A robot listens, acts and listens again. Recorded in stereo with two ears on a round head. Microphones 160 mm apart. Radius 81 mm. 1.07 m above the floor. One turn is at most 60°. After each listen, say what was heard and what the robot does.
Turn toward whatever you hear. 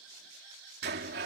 The sliding door: about 60° right or 120° right. Turn 60° right.
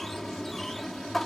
Found it: a sliding door, straight ahead.